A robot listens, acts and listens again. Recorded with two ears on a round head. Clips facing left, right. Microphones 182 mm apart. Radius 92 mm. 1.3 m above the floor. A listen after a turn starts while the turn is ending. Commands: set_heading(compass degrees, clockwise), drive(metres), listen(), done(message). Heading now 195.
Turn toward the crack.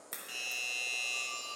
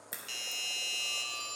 set_heading(225)
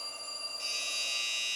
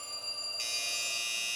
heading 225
listen()
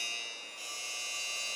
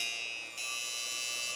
done("I heard a crack, but can't make it out now. It was about 20° left or 140° right.")